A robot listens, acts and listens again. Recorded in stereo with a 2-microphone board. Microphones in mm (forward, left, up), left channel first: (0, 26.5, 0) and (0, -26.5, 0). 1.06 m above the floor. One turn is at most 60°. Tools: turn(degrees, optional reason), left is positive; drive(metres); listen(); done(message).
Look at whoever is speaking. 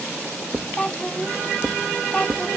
turn(degrees=25, reason="The child speaking: about 25° left or 155° left.")
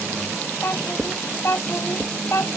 turn(degrees=60, reason="So it is at 125° left.")
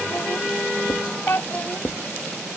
turn(degrees=50, reason="The child speaking is now 50° left.")
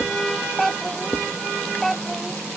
done("Found it: a child speaking, straight ahead.")